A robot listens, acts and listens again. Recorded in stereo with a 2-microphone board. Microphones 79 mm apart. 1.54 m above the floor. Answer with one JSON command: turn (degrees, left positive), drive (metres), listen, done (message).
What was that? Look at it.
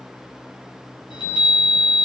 {"turn": 70}
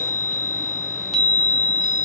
{"done": "Facing the chime, under 1 m away."}